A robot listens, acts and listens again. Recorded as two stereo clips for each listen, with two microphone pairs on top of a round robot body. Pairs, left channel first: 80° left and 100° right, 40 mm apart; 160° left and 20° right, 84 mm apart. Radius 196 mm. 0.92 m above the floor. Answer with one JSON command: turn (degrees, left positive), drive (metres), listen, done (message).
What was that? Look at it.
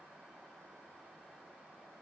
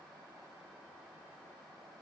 {"listen": true}
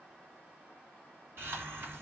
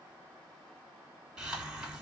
{"turn": -105}
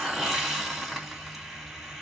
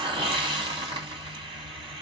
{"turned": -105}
{"turn": -15}
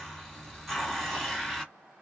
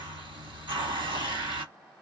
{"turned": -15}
{"done": "Facing the hiss, 2 to 4 m away."}